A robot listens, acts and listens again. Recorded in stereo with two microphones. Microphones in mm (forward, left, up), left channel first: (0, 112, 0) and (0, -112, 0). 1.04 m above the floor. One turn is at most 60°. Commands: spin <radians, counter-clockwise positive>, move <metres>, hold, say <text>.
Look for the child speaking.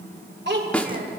spin -0.79
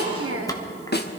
spin -1.05
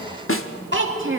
spin -1.05
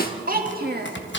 spin -0.79
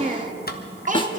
spin -0.61
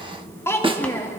spin 0.17
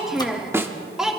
say Found it: a child speaking, straight ahead, 1 to 2 m away.